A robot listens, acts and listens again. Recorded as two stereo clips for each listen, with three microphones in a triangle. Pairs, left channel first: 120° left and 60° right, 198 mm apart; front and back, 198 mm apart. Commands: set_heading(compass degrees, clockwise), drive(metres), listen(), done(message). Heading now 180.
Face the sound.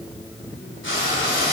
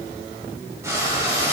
set_heading(75)
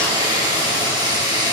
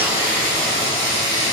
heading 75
set_heading(65)
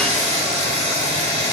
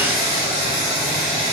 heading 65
done("Found it: frying, straight ahead.")